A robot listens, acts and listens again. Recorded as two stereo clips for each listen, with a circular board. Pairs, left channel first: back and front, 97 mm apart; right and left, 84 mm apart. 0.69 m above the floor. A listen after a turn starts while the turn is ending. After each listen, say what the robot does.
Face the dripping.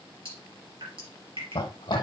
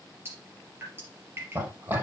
Turn 30° left.
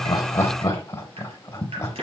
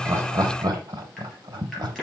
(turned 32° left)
Facing the dripping.